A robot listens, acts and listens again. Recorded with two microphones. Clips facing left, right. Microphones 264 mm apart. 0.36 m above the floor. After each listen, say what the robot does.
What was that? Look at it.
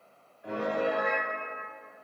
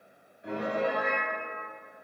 Turn 20° right.
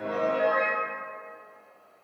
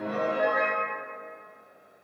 Turn 135° right.
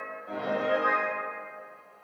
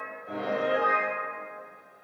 Found it: a piano, straight ahead.